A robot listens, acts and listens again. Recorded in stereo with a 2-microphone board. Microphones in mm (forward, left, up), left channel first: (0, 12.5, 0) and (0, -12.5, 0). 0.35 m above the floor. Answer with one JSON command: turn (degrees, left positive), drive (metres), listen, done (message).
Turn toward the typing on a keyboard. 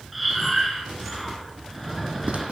{"listen": true}
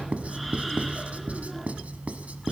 {"listen": true}
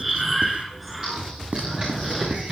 {"turn": -35}
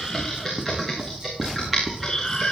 {"done": "Found it: typing on a keyboard, straight ahead, over 4 m away."}